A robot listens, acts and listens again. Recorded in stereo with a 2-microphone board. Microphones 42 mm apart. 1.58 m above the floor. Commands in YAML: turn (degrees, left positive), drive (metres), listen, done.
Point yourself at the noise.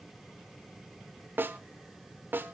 turn: -55
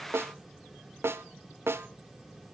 turn: -75
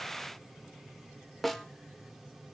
done: "Found it: a snare drum, straight ahead."